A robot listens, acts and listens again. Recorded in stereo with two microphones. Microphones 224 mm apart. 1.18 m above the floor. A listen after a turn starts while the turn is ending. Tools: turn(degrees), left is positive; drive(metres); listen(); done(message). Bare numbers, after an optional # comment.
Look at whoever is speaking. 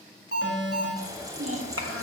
# The child speaking: about 70° right or 110° right.
turn(-70)
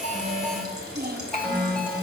# So it is at 40° right.
turn(-40)
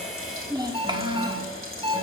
# The child speaking is now 20° right.
turn(-20)
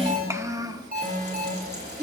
# The child speaking is now 20° right.
turn(-20)
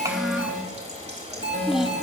done("Facing the child speaking.")